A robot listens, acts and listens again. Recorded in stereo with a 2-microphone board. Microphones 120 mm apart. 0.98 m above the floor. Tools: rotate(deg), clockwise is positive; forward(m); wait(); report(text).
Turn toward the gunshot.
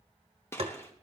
rotate(-20)
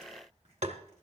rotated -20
wait()
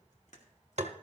report("I heard a gunshot, but can't make it out now. It was about straight ahead or 140° left.")